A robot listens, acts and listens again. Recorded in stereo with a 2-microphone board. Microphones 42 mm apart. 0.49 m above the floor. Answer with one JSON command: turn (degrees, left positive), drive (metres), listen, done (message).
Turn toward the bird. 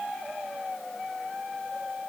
{"listen": true}
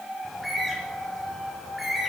{"turn": -30}
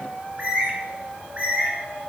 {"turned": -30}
{"turn": -145}
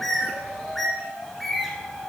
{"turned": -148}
{"done": "Facing the bird, 1 to 2 m away."}